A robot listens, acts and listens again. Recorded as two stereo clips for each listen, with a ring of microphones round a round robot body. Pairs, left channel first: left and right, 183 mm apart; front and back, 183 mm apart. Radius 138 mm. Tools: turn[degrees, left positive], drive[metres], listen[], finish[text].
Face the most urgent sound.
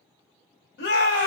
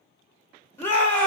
Thought: The shout: 80° left.
Action: turn[80]
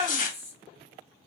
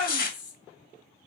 Thought: The shout is now 10° right.
Action: turn[-10]
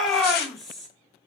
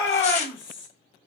Action: finish[Found it: a shout, straight ahead.]